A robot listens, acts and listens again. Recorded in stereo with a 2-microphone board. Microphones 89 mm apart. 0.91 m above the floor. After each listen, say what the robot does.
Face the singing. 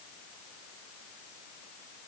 Keep listening.
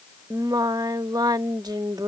Turn 45° right.
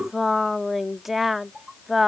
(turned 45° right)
Facing the singing.